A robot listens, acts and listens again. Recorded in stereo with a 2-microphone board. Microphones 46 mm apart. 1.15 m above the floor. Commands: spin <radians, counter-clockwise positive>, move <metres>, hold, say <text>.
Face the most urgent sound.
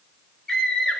spin 0.35
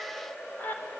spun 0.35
spin 2.44
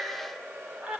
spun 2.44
spin -0.44
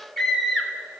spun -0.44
say Found it: a scream, straight ahead, over 4 m away.